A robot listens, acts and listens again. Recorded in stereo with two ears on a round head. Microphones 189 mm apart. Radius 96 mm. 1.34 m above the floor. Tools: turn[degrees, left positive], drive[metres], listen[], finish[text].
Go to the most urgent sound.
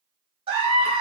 Thought: The scream: about 25° right or 155° right.
Action: turn[-25]
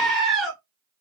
Action: drive[1.0]
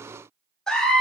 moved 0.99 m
Action: drive[1.0]
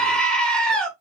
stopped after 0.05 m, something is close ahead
Action: finish[Arrived at the scream, straight ahead.]